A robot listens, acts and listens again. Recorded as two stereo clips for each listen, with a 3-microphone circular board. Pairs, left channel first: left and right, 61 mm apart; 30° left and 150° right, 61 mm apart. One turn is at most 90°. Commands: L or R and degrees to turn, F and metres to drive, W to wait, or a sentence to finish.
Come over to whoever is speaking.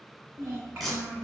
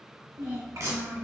R90
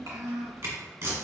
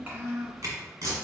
R85
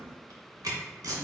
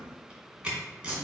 R40
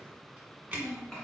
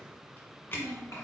L15
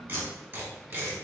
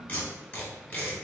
F1.0
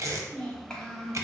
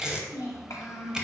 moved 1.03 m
L15
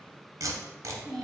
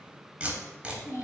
F1.0
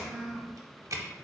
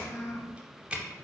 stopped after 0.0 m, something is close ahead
Arrived at the child speaking, straight ahead.